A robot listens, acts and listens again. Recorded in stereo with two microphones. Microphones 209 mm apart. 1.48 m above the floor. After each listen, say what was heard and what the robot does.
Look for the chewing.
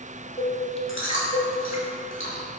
The chewing: about 70° left or 110° left. Turn 70° left.
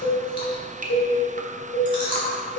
So it is at 25° left. Turn 25° left.
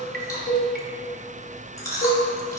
The chewing is now 15° left. Turn 15° left.
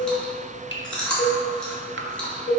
Found it: chewing, straight ahead.